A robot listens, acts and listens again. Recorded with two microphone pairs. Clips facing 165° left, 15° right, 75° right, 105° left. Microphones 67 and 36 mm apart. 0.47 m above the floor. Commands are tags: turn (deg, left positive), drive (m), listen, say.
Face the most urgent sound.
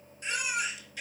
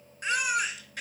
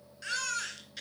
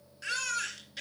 <turn deg="20"/>
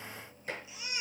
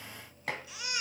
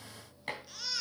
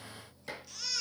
<say>Found it: a baby crying, straight ahead.</say>